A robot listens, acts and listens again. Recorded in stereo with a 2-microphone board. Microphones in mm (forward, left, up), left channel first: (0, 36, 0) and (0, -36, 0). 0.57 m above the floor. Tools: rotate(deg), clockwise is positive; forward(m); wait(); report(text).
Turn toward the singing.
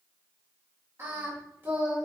rotate(25)
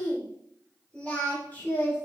rotate(-30)
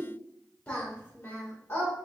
rotate(-30)
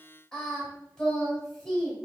rotate(-15)
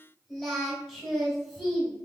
report("Facing the singing, 2 to 4 m away.")